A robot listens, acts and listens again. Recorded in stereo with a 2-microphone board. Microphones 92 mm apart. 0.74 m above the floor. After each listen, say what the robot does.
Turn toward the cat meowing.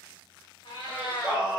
Turn 60° left.
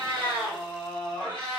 Turn 70° left.
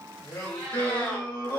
Turn 15° left.
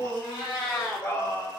Turn 15° left.
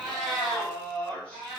Found it: a cat meowing, straight ahead.